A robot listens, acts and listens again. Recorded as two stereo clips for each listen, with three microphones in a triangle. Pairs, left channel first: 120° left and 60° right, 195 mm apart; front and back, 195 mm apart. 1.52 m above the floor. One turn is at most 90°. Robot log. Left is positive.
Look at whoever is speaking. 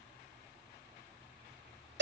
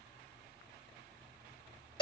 cmd idle
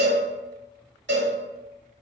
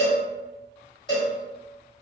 cmd idle
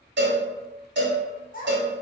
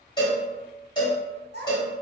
note: The child speaking: 160° left.
cmd yaw +90
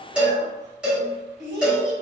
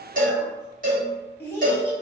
note: The child speaking is now 80° left.
cmd yaw +80
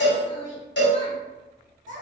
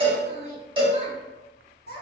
note: The child speaking is now 20° right.
cmd yaw -20
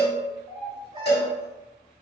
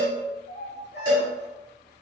end: Found it: a child speaking, straight ahead.